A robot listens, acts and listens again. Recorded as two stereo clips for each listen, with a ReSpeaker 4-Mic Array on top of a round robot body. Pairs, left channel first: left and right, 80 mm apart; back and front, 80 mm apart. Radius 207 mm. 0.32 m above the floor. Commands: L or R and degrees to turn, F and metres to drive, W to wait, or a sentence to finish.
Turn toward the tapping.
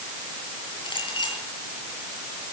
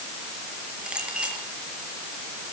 W
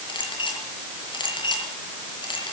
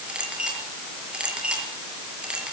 W
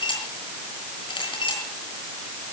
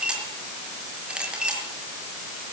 I can't make out tapping to turn to.